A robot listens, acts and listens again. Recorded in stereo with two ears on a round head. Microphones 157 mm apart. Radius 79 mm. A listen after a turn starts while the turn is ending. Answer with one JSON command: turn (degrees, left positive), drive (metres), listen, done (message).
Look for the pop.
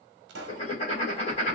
{"turn": -65}
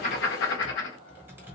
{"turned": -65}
{"listen": true}
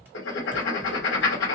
{"done": "I heard a pop, but can't make it out now. It was about straight ahead or 50° right."}